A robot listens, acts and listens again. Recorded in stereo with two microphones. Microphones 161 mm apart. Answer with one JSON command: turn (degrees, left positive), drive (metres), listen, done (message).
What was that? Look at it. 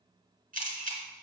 {"turn": -55}
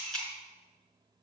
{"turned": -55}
{"done": "Facing the camera shutter."}